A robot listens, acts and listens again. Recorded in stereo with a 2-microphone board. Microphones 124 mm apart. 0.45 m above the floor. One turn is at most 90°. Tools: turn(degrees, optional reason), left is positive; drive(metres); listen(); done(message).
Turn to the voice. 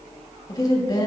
turn(degrees=30, reason="The woman speaking: about 30° left or 150° left.")
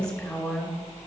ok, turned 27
done("Found it: a woman speaking, straight ahead.")